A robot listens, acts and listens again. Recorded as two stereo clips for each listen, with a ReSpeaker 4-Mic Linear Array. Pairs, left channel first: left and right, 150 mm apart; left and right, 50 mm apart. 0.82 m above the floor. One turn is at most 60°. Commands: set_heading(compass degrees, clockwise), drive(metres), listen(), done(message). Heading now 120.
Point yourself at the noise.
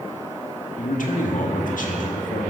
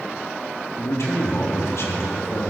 set_heading(60)
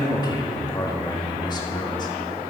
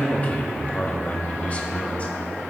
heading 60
set_heading(30)
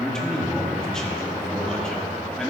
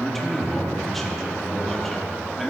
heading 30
done("Facing the man speaking.")